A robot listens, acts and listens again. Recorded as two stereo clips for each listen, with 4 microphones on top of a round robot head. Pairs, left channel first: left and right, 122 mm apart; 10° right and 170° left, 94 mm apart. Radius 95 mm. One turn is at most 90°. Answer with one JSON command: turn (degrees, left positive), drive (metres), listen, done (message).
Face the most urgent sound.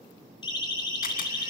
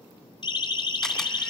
{"turn": 30}
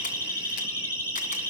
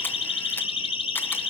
{"turn": 15}
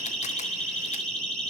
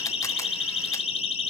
{"done": "Found it: a siren, straight ahead, over 4 m away."}